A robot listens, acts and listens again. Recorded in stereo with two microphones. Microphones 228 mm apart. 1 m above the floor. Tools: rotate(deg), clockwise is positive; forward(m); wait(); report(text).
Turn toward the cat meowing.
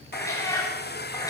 rotate(-30)
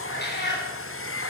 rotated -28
rotate(-130)
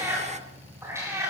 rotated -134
rotate(10)
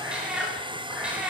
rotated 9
report("Facing the cat meowing.")